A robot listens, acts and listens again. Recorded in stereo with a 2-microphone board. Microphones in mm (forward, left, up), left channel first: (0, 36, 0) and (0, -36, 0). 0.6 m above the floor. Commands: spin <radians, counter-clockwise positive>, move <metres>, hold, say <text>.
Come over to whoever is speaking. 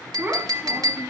spin -0.52
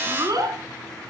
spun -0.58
spin -2.09
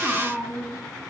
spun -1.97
move 1.0
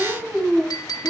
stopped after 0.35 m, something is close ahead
say Blocked. The child speaking is further on, straight ahead.